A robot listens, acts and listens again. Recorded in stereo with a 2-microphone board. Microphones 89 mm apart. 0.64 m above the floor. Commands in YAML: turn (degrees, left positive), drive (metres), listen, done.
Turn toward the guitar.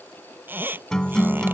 turn: 30
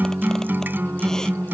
turn: -25
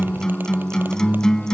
done: "Facing the guitar."